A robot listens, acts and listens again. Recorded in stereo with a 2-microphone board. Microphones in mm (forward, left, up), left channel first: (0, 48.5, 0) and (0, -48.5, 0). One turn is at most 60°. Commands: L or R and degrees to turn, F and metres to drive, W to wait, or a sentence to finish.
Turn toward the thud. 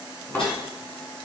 L20
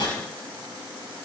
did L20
W
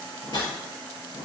I heard a thud, but can't make it out now. It was about straight ahead or 140° left.